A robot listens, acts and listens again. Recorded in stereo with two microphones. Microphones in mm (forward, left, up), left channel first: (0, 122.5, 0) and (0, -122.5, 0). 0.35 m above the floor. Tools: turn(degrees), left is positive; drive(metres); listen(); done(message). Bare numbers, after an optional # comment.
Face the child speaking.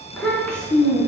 turn(30)
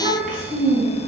# So it is at 40° right.
turn(-40)
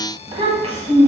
# The child speaking is now 30° right.
turn(-30)
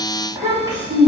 # The child speaking is now 25° right.
turn(-25)
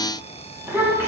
# The child speaking is now 10° right.
turn(-10)
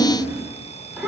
done("Facing the child speaking.")